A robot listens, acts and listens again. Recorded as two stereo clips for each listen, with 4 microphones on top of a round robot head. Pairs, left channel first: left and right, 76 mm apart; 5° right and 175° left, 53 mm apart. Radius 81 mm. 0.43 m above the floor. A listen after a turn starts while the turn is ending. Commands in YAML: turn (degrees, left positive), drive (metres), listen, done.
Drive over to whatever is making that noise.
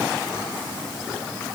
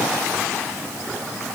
listen: true
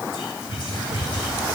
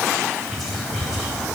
turn: 80
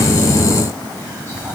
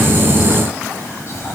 turn: 30
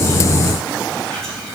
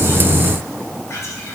drive: 1.0
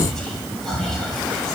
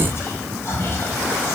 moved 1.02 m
drive: 1.0
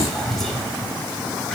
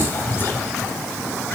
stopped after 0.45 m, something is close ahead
done: "Arrived at the whispering, straight ahead."